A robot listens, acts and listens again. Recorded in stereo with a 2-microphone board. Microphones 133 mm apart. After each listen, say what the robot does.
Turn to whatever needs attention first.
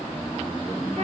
Keep listening.
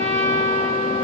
Keep listening.
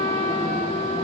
I can't make out anything urgent, only a trumpet.